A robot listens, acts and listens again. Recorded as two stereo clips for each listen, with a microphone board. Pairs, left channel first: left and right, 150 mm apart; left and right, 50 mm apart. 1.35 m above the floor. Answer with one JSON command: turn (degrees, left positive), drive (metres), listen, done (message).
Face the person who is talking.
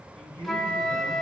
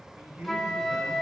{"turn": -35}
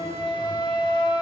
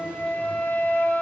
{"listen": true}
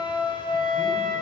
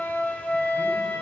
{"listen": true}
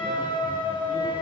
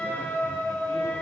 {"done": "I heard a man speaking, but can't make it out now. It was about straight ahead or 110° right."}